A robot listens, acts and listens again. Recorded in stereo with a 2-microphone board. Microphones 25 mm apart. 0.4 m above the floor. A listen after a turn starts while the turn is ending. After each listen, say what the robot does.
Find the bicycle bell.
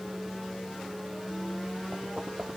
Keep listening.
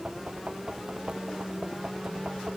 Keep listening.
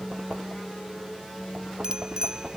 Turn 30° right.
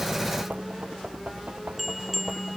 Found it: a bicycle bell, straight ahead.